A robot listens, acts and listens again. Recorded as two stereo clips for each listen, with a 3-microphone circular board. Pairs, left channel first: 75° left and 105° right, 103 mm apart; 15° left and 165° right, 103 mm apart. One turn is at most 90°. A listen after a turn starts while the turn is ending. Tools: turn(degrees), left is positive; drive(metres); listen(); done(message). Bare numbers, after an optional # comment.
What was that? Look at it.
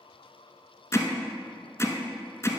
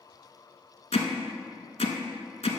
# The hammering: 10° left.
turn(10)
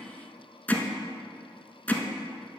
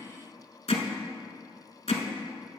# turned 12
done("Facing the hammering.")